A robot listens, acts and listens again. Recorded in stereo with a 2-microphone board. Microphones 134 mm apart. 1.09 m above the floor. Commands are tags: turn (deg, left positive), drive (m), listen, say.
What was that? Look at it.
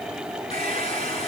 <turn deg="50"/>
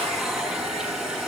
<say>Found it: a hair dryer, straight ahead.</say>